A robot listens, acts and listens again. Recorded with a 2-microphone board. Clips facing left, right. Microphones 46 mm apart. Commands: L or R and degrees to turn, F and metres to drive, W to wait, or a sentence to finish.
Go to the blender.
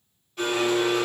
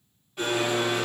R30
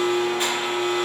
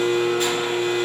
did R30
L25
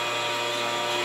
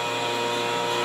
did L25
R10
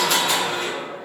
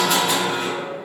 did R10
F1.0
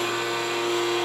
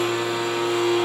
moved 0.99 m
R10
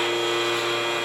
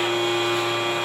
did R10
F1.0
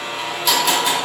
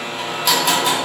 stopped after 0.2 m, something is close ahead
Arrived at the blender, straight ahead.